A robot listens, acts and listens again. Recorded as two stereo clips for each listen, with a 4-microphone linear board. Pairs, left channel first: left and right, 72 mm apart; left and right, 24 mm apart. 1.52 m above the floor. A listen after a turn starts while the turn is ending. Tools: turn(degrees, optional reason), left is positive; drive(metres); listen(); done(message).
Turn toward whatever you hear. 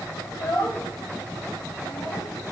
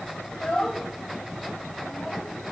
turn(degrees=60, reason="The child speaking: about 60° left or 120° left.")
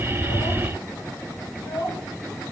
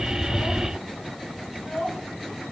turn(degrees=65, reason="So it is at 65° left.")
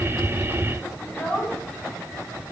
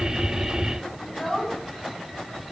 turn(degrees=25, reason="The child speaking is now 25° left.")
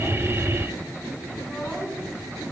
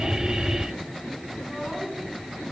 done("Facing the child speaking.")